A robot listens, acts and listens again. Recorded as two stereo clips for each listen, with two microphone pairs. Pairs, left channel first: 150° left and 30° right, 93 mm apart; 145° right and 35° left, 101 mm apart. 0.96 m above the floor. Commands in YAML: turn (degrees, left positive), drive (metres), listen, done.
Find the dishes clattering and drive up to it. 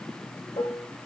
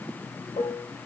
turn: -175
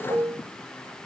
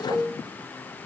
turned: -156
turn: -15
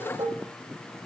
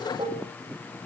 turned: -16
drive: 1.0
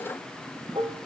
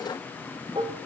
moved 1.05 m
drive: 1.0
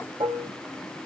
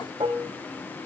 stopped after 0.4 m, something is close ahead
done: "Arrived at the dishes clattering, straight ahead."